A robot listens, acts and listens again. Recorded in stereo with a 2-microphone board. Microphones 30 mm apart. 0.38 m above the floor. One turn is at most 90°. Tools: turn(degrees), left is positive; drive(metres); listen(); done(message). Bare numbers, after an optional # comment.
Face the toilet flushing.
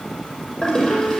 # The toilet flushing: about 25° left or 155° left.
turn(25)
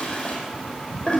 # So it is at 130° left.
turn(90)
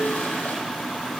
# Nothing new. It was at 40° left.
turn(40)
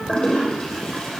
# The toilet flushing is now 25° left.
turn(25)
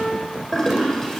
# The toilet flushing is now 10° left.
turn(10)
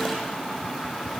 listen()
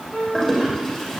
done("Facing the toilet flushing.")